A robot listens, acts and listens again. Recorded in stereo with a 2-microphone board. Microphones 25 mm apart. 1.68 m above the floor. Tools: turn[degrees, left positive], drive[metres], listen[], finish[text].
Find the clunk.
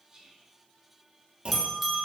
Thought: The clunk: about 45° right or 135° right.
Action: turn[-45]
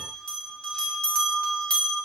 Action: listen[]
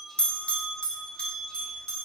Action: finish[I heard a clunk, but can't make it out now. It was about straight ahead or 90° right.]